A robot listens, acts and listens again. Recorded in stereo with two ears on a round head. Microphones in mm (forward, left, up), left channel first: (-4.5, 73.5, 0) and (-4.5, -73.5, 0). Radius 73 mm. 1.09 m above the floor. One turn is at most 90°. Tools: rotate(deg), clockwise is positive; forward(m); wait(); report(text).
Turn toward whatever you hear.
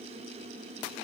wait()
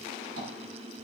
wait()
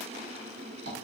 rotate(65)
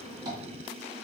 rotate(30)
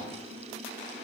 wait()
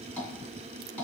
rotate(-10)
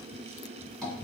report("Found it: tapping, straight ahead.")